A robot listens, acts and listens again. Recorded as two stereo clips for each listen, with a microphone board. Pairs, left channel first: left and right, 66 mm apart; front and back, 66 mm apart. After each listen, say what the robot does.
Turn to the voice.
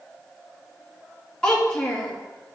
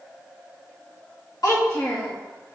Turn 10° left.
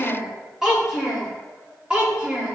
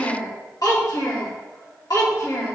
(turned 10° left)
Turn 20° right.
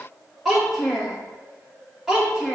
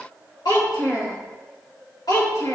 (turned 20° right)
Facing the child speaking, 2 to 4 m away.